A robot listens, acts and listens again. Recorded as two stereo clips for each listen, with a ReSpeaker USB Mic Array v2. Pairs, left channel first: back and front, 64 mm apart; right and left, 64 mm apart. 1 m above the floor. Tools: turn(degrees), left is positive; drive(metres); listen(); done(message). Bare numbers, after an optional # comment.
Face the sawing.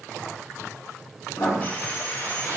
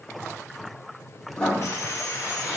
# The sawing: 120° right.
turn(-120)
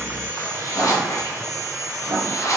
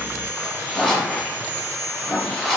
# The sawing is now 30° left.
turn(30)
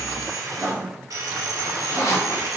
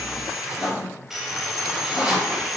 done("Found it: sawing, straight ahead, under 1 m away.")